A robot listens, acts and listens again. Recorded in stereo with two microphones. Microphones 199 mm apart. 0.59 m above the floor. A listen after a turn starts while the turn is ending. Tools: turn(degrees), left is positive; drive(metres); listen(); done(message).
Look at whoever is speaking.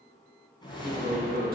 turn(degrees=-50)
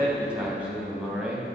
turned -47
done("Facing the man speaking.")